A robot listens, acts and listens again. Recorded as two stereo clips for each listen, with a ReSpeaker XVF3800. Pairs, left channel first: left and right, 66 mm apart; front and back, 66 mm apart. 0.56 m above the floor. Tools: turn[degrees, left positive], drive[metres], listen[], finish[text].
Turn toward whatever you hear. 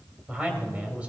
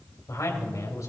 Thought: The man speaking: 25° right.
Action: turn[-25]
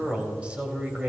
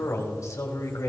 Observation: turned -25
Thought: The man speaking is now 20° right.
Action: turn[-20]
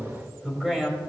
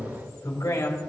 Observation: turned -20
Thought: The man speaking is now 10° right.
Action: turn[-10]
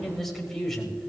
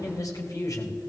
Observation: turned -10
Action: finish[Found it: a man speaking, straight ahead, 2 to 4 m away.]